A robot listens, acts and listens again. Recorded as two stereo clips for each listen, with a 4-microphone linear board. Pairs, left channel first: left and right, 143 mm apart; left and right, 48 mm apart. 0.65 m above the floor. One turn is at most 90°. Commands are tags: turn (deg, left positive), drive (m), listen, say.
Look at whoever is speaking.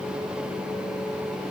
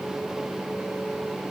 <listen/>
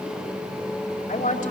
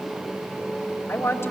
<turn deg="70"/>
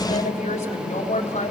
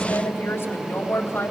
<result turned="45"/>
<turn deg="60"/>
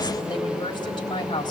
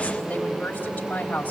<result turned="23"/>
<turn deg="35"/>
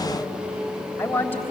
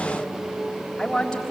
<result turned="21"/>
<turn deg="15"/>
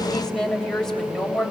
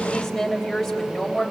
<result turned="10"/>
<say>Found it: a woman speaking, straight ahead.</say>